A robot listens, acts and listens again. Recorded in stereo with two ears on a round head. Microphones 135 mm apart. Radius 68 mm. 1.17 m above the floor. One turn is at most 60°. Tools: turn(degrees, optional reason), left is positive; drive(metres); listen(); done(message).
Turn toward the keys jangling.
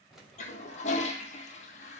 turn(degrees=30)
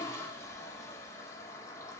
listen()
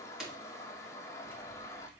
turn(degrees=-30)
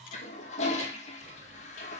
listen()
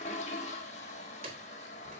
turn(degrees=-60, reason="So it is at 135° right.")
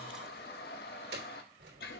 turn(degrees=-60, reason="The keys jangling is now 75° right.")
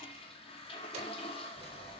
turn(degrees=-40, reason="The keys jangling is now 40° right.")
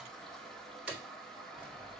done("Facing the keys jangling, 2 to 4 m away.")